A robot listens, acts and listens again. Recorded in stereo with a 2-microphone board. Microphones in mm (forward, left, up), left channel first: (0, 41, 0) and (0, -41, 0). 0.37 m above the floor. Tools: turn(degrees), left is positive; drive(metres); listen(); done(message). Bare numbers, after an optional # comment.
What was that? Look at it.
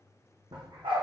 turn(-90)
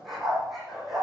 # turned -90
done("Facing the dog barking, over 4 m away.")